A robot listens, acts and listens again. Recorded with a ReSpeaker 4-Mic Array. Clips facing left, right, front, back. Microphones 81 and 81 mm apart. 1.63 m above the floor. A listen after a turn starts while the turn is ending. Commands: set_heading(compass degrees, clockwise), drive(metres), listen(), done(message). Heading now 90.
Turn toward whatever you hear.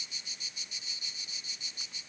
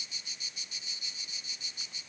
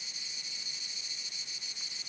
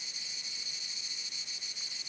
listen()
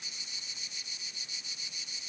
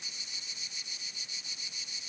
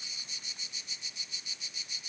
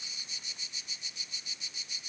listen()
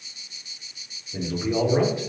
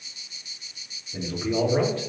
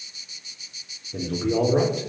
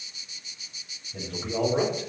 set_heading(75)
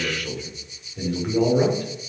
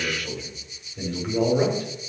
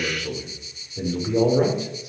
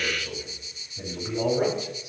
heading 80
set_heading(70)
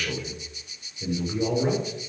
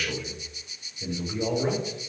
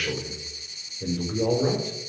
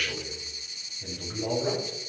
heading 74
done("Facing the man speaking.")